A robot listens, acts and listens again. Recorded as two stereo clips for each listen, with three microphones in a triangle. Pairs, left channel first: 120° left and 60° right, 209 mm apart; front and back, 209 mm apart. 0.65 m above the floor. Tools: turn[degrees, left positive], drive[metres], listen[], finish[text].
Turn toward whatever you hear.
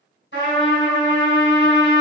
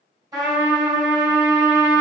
Thought: The trumpet: 105° left.
Action: turn[105]
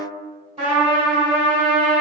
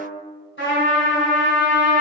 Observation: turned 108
Action: finish[Facing the trumpet.]